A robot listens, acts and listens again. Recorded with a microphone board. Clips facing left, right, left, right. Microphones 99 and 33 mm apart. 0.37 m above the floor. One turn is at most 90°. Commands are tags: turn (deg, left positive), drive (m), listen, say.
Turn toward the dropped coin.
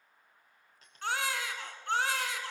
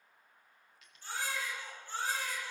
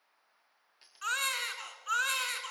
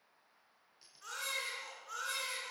<turn deg="30"/>
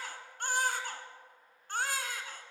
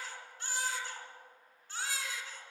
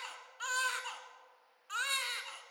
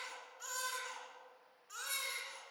<listen/>
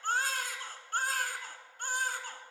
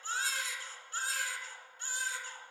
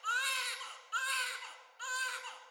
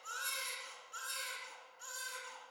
<say>I heard a dropped coin, but can't make it out now. It was about straight ahead or 120° left.</say>